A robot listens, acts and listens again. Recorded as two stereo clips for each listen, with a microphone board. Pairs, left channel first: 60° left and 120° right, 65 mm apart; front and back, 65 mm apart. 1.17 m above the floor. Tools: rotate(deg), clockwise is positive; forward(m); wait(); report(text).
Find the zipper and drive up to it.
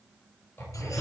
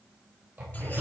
rotate(-125)
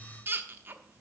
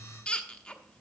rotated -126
wait()
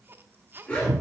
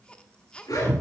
forward(1.0)
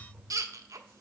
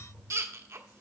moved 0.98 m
wait()
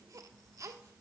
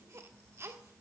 wait()
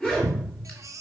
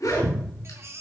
rotate(10)
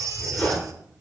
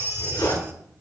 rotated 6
forward(1.0)
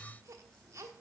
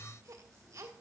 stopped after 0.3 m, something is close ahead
wait()
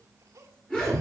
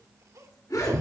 rotate(15)
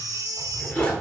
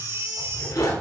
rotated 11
report("Blocked. The zipper is further on, straight ahead.")